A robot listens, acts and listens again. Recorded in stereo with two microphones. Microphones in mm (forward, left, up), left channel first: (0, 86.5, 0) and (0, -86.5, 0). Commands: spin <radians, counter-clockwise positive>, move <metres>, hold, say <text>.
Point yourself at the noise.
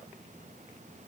hold
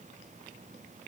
hold
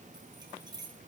spin -0.44
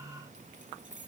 spin -2.36
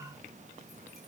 hold
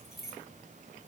say Facing the keys jangling.